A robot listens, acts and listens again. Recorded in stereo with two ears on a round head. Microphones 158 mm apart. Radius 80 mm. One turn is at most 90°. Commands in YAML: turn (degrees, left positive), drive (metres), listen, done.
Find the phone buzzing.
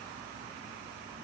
listen: true
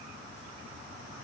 listen: true
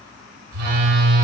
turn: -65
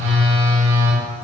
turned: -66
turn: -50
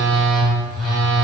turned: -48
done: "Found it: a phone buzzing, straight ahead, 2 to 4 m away."